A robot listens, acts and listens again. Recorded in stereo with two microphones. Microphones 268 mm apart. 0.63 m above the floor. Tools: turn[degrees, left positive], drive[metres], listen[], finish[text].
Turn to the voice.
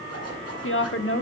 Thought: The woman speaking: about 50° left or 130° left.
Action: turn[50]
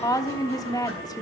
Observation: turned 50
Thought: So it is at 15° left.
Action: turn[15]
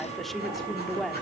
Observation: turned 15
Action: finish[Facing the woman speaking, 1 to 2 m away.]